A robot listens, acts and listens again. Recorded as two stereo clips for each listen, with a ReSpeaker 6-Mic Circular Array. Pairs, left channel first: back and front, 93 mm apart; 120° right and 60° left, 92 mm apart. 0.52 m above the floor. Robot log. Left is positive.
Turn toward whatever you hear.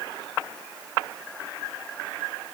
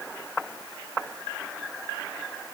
cmd idle
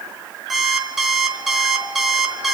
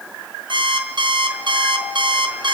note: The alarm clock: 90° left.
cmd yaw +90
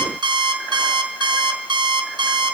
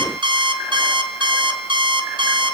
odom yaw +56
note: The alarm clock is now 35° left.
cmd yaw +35
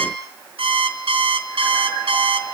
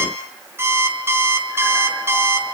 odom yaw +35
end: Found it: an alarm clock, straight ahead, over 4 m away.